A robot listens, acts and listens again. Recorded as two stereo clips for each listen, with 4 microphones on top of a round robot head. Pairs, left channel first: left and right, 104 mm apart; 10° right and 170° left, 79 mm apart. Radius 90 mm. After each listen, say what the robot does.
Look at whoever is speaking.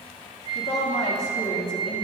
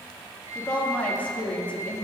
Turn 60° left.
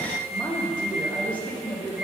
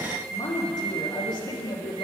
Turn 15° left.
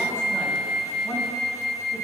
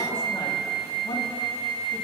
Keep listening.
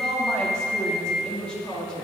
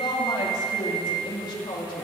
Turn 10° left.
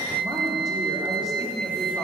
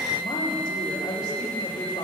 Keep listening.
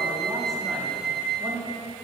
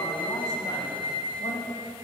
Facing the woman speaking, 2 to 4 m away.